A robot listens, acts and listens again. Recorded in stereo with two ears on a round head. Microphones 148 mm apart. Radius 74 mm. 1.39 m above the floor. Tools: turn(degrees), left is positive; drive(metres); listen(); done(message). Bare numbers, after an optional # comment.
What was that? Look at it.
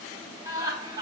# The laughter: about 25° right or 155° right.
turn(-25)
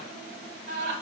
# So it is at 115° right.
turn(-115)
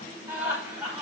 # The laughter is now 10° right.
turn(-10)
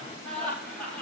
# The laughter is now 10° left.
turn(10)
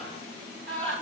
done("Facing the laughter.")